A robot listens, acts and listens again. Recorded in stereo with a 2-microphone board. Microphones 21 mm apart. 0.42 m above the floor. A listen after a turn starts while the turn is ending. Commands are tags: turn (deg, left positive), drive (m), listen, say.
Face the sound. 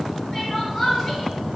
<turn deg="30"/>
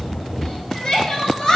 <turn deg="135"/>
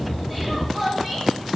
<say>Facing the crying.</say>